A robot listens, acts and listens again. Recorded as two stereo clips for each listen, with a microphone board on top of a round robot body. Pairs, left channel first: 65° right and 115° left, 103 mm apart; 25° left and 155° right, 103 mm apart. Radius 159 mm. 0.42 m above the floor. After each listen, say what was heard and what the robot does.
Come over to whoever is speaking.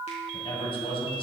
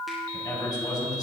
The man speaking: 30° right. Turn 30° right.
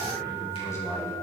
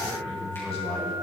Drive 1.0 m forward.
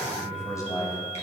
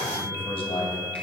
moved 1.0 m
The man speaking is now 10° right. Turn 10° right.
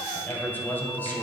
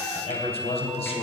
Drive 1.0 m forward.
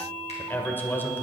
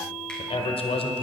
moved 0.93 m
Drive 1.0 m forward.
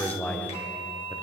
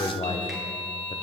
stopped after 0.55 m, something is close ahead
I am next to the man speaking.